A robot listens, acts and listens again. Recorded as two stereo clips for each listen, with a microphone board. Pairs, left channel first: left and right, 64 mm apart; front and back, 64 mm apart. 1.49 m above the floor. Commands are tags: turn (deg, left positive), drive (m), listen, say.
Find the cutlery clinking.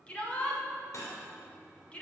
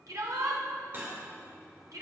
<turn deg="125"/>
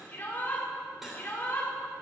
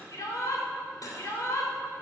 <say>Found it: cutlery clinking, straight ahead.</say>